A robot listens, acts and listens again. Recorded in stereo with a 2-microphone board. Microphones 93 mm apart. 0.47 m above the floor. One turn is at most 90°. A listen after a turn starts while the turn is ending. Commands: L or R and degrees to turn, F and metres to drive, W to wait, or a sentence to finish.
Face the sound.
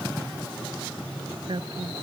R60
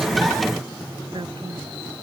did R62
R60
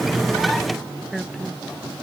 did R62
Facing the woman speaking.